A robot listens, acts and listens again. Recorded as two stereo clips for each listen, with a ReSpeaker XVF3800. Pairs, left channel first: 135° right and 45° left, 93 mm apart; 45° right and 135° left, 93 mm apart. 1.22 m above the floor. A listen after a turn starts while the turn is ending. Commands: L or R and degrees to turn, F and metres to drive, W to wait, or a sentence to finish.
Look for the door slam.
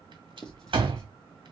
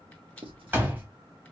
L65
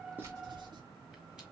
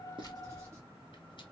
I heard a door slam from this way, but can't make it out now.